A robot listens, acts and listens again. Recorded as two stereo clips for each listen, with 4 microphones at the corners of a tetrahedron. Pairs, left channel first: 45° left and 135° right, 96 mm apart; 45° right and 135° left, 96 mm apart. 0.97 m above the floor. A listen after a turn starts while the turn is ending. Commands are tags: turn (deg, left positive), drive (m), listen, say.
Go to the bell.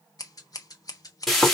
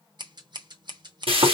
<listen/>
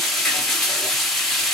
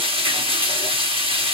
<listen/>
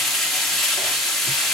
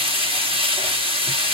<say>I can't make out a bell, only scissors and frying.</say>